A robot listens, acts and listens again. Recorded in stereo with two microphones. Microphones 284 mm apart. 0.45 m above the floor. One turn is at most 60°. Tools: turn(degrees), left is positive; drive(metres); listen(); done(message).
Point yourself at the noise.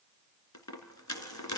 turn(degrees=60)
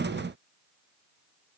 turn(degrees=30)
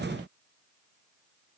done("Facing where the dropped coin came from. I can't hear it now.")